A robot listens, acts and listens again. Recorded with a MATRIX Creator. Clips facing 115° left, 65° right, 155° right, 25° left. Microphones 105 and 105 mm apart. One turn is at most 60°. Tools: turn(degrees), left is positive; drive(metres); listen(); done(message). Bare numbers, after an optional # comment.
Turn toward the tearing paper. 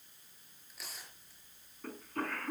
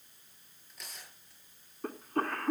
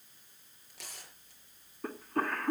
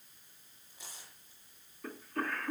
# The tearing paper: 160° right.
turn(-60)
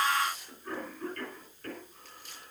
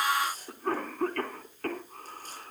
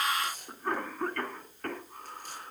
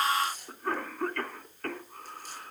# The tearing paper is now 120° right.
turn(-60)
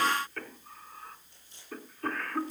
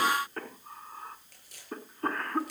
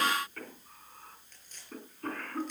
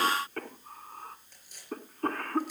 # The tearing paper is now 55° right.
turn(-55)
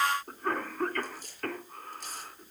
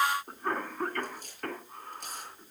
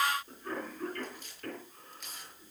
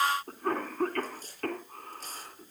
# The tearing paper is now 30° right.
turn(-30)
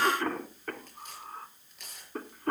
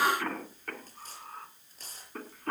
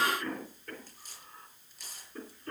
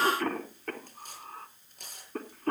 # The tearing paper is now 15° right.
turn(-15)
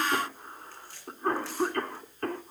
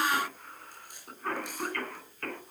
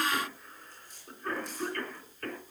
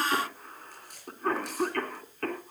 done("Found it: tearing paper, straight ahead.")